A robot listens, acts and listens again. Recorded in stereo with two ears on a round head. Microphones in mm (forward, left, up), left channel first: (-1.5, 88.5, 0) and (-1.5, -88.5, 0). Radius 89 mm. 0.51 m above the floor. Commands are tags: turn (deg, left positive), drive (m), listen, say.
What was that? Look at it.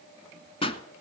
<turn deg="25"/>
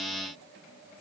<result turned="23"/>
<listen/>
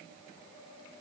<say>I heard a pop, but can't make it out now. It was about 5° left or 130° left.</say>